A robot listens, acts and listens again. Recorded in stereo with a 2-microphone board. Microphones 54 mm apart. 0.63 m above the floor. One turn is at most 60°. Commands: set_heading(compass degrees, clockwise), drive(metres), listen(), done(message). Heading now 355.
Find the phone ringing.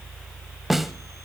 listen()
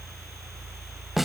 listen()
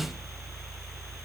done("I can't make out a phone ringing, only a snare drum.")